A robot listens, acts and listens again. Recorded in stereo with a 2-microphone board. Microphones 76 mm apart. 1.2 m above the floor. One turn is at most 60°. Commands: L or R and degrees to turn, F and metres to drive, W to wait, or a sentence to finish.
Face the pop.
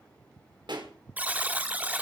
R60
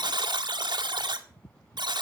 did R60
R30
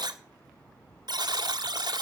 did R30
I heard a pop from this way, but can't make it out now.